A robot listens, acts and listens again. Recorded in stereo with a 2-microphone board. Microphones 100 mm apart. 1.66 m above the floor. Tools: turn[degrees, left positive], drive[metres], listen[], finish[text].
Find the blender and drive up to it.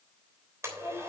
Thought: The blender: about 30° right or 150° right.
Action: turn[-30]
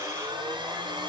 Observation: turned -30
Thought: So it is at 120° right.
Action: turn[-120]
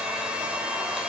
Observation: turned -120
Thought: The blender is now 10° right.
Action: turn[-10]
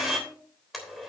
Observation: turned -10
Action: drive[1.0]
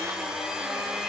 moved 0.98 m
Action: drive[1.0]
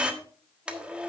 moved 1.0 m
Thought: The blender is now 15° right.
Action: turn[-15]
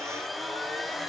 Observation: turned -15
Action: drive[1.0]
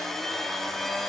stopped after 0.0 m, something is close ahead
Action: finish[I am next to the blender.]